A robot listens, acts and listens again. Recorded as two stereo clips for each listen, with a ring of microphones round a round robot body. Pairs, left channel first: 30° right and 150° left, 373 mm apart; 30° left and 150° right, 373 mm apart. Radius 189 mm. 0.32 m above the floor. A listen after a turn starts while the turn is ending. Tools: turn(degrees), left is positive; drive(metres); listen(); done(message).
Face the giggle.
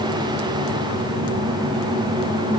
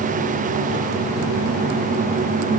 listen()
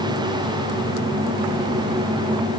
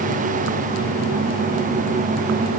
listen()
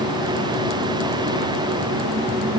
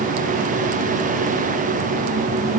done("I can't make out a giggle.")